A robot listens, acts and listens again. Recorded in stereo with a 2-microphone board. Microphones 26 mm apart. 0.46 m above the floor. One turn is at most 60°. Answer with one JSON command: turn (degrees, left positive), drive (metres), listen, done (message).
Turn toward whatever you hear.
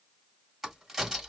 {"turn": -30}
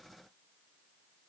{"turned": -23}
{"listen": true}
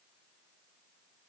{"done": "I heard a crack, but can't make it out now. It was about 10° left or 145° right."}